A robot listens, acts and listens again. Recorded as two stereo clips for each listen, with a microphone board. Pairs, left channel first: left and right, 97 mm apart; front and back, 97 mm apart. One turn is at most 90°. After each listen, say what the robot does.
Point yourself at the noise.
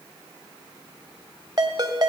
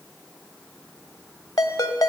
Turn 45° right.
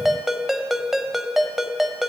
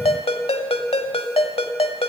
Facing the ringtone.